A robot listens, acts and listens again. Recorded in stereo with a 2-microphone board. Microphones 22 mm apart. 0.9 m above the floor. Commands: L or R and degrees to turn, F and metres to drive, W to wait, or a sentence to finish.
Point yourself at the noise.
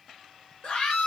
L60
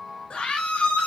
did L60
L55
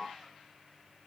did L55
W
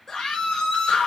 L25
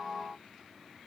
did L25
W
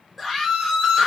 Found it: a scream, straight ahead.